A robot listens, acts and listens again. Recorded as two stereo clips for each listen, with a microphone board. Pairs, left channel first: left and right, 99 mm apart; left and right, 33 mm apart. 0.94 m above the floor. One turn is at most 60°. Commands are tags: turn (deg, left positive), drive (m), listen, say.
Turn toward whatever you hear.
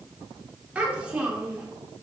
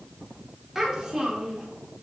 <turn deg="-30"/>
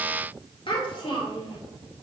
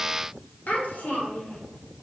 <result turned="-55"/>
<turn deg="60"/>
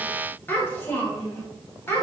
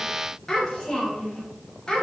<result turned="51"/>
<turn deg="25"/>
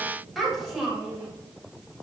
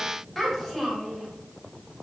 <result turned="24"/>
<say>Facing the child speaking.</say>